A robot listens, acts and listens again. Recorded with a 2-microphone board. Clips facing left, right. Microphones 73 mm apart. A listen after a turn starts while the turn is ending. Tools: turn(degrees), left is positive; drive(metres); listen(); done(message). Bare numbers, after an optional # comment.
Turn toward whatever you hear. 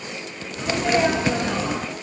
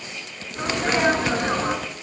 # The sneeze: about 45° right or 135° right.
turn(-45)
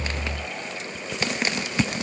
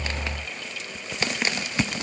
listen()
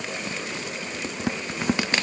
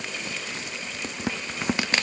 done("I heard a sneeze, but can't make it out now. It was about straight ahead or 90° right.")